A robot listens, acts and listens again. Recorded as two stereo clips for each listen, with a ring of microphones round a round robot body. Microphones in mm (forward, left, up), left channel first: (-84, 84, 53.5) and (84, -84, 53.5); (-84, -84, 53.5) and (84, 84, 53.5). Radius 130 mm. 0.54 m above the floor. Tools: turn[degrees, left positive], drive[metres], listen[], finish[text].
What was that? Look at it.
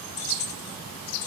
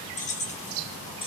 Thought: The keys jangling: 155° left.
Action: turn[155]
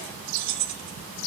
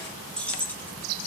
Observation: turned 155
Thought: The keys jangling is now 50° right.
Action: turn[-50]
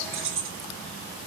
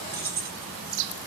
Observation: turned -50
Thought: The keys jangling is now 10° right.
Action: turn[-10]
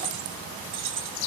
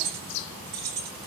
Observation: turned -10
Thought: The keys jangling is now 10° right.
Action: turn[-10]
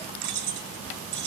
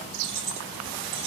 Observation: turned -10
Action: finish[Facing the keys jangling.]